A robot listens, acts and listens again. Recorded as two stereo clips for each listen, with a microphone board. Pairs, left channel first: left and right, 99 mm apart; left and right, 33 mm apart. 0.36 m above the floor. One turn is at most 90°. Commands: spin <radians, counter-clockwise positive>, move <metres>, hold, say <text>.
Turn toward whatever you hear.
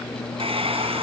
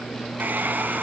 spin -1.57
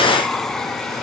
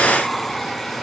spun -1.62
say Facing the hair dryer, 2 to 4 m away.